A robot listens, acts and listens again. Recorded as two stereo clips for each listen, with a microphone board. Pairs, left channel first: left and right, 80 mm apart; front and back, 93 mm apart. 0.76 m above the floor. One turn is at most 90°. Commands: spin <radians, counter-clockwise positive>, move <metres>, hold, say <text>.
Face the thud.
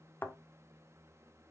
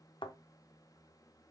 spin 0.44
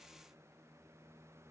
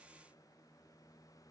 say Facing where the thud came from. I can't hear it now.